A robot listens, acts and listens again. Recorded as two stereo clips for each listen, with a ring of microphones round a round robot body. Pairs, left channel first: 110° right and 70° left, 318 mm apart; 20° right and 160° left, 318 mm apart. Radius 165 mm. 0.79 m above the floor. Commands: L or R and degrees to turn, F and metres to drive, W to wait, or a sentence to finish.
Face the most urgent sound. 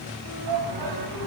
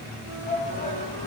L50
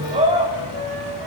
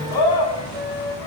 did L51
Facing the shout.